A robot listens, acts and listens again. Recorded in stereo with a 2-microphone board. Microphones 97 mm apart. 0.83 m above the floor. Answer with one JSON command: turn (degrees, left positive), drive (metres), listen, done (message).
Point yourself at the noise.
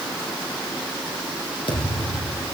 {"turn": 70}
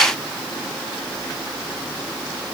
{"listen": true}
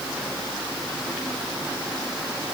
{"done": "I heard a thud, but can't make it out now. It was about straight ahead or 40° left."}